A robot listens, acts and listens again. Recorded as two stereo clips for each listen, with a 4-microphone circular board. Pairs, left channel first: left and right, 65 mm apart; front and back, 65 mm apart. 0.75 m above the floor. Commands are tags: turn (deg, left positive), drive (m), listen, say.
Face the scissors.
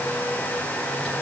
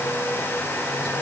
<listen/>
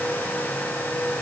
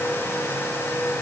<listen/>
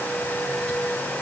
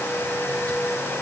<say>I can't make out scissors to turn to.</say>